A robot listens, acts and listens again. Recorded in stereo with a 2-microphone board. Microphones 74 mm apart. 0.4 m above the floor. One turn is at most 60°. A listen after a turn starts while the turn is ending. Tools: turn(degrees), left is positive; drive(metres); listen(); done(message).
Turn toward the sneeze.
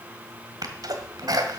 turn(degrees=-55)
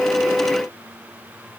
listen()
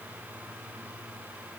done("I heard a sneeze, but can't make it out now. It was about straight ahead or 70° right.")